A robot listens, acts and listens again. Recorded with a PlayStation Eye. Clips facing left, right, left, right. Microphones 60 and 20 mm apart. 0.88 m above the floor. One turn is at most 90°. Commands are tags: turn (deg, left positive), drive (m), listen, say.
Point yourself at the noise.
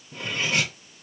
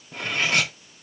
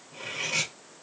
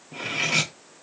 <turn deg="-65"/>
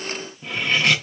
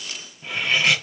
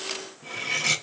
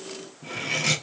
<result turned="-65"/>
<say>Found it: cutlery clinking, straight ahead, 1 to 2 m away.</say>